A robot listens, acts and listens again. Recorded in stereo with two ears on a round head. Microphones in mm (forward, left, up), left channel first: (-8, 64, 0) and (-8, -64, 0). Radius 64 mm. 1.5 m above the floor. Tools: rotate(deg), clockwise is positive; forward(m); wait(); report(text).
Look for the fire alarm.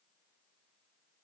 wait()
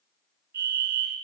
rotate(90)
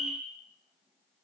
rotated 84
report("Facing the fire alarm, 2 to 4 m away.")